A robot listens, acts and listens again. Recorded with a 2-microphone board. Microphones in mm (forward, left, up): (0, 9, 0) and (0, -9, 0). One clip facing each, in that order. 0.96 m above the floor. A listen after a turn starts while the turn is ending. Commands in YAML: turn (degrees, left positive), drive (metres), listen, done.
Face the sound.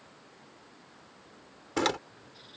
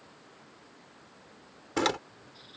turn: 30
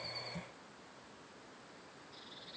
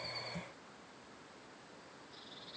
listen: true
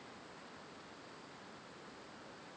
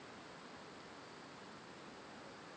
done: "I heard a door slam, but can't make it out now. It was about 30° right or 150° left."